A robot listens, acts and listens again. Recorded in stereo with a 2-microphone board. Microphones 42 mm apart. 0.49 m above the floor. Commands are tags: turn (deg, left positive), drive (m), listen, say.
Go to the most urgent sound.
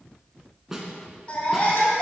<turn deg="30"/>
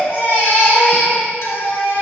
<turn deg="120"/>
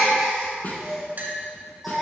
<drive m="1.0"/>
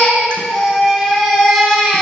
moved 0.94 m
<drive m="1.0"/>
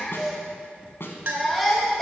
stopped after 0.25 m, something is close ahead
<say>I am next to the baby crying.</say>